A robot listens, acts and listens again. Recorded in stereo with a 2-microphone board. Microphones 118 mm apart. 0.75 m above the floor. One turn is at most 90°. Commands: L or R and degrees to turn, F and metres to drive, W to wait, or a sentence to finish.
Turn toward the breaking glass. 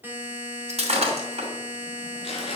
R65
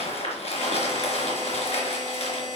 W
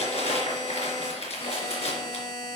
I heard breaking glass, but can't make it out now. It was about straight ahead or 50° right.